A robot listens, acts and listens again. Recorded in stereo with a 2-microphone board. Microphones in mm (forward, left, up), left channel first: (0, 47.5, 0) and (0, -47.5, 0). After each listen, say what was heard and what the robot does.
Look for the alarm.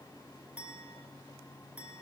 Keep listening.
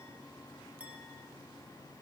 Keep listening.
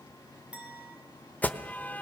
The alarm: about 15° left or 165° left. Turn 15° left.
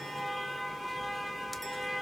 Found it: an alarm, straight ahead, under 1 m away.